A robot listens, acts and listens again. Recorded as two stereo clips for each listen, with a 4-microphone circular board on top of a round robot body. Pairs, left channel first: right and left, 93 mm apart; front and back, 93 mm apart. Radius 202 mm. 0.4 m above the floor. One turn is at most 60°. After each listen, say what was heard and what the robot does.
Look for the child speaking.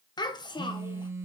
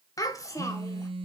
The child speaking: 55° right. Turn 55° right.
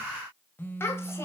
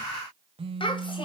The child speaking is now 30° right. Turn 30° right.
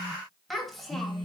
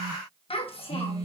Facing the child speaking.